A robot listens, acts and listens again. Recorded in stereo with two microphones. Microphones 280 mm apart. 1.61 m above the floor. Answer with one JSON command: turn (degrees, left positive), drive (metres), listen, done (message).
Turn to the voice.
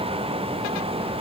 {"listen": true}
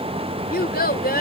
{"turn": 30}
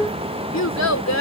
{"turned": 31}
{"turn": 115}
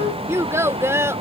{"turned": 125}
{"turn": -10}
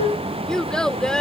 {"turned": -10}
{"done": "Found it: a child speaking, straight ahead."}